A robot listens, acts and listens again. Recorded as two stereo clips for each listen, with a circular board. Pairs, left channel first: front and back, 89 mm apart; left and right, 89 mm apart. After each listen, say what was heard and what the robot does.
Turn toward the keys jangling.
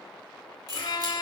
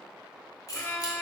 The keys jangling: 135° left. Turn 135° left.
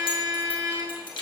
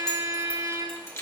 The keys jangling is now 30° left. Turn 30° left.
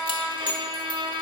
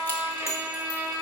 The keys jangling is now 30° left. Turn 30° left.
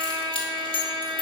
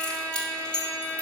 The keys jangling is now 10° left. Turn 10° left.
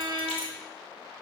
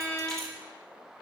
Keep listening.
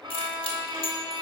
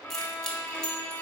Facing the keys jangling, 1 to 2 m away.